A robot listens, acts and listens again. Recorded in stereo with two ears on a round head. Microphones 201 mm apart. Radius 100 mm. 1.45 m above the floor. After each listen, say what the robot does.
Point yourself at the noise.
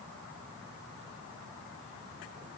Keep listening.
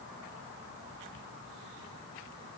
Keep listening.
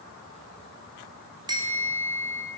Turn 20° right.
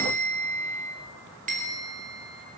Turn 140° right.
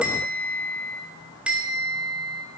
Facing the bell, 2 to 4 m away.